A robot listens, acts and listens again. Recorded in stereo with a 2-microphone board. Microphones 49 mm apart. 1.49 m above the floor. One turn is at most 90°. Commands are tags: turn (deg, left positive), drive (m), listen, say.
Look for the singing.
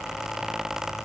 <listen/>
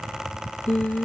<turn deg="30"/>
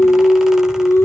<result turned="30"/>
<turn deg="90"/>
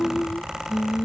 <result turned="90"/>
<turn deg="15"/>
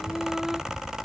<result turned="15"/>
<listen/>
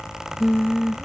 <say>Found it: singing, straight ahead.</say>